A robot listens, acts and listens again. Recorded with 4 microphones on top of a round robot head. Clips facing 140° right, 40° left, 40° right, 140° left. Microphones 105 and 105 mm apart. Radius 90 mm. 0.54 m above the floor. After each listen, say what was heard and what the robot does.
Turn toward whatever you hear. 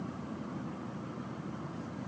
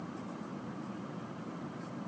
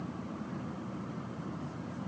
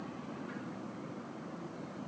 Keep listening.
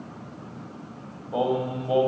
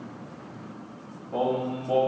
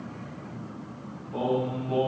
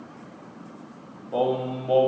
The singing: 140° left. Turn 140° left.
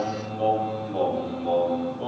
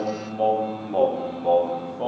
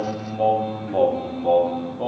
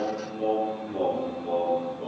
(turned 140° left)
The singing is now 10° right. Turn 10° right.
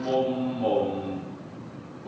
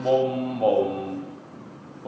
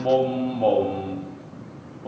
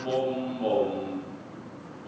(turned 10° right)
Found it: singing, straight ahead, 1 to 2 m away.